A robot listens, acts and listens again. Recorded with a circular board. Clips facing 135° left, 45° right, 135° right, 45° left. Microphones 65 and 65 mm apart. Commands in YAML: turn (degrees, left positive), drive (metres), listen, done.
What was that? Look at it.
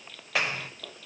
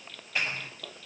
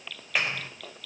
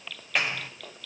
turn: 135
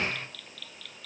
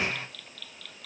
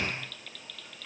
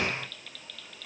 turn: 40
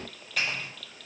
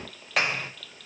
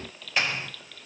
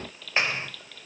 turn: -20
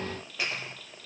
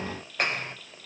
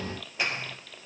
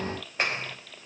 done: "Found it: a clap, straight ahead."